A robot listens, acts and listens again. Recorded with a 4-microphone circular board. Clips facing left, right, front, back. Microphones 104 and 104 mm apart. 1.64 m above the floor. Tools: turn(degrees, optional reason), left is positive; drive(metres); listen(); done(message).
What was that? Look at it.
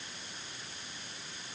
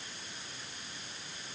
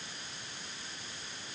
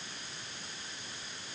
listen()
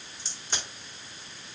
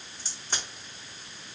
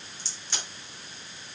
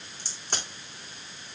turn(degrees=-135, reason="The crack: 135° right.")
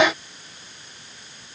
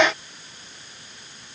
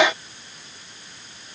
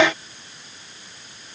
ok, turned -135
done("I heard a crack from this way, but can't make it out now.")